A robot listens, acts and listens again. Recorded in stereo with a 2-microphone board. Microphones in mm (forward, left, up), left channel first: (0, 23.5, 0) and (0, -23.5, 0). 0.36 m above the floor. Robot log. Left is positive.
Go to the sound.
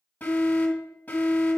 note: The alarm: about 40° left or 140° left.
cmd yaw +40
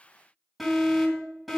cmd fwd 1.0
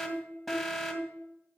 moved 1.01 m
cmd fwd 1.0
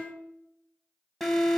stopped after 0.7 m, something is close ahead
end: I am next to the alarm.